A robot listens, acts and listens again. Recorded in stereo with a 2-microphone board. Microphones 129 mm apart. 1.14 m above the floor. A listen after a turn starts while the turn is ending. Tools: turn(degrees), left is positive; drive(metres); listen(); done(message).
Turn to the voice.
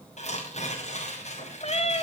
listen()
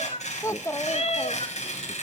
turn(degrees=20)
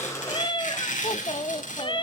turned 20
turn(degrees=135)
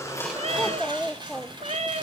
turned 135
done("Facing the child speaking, under 1 m away.")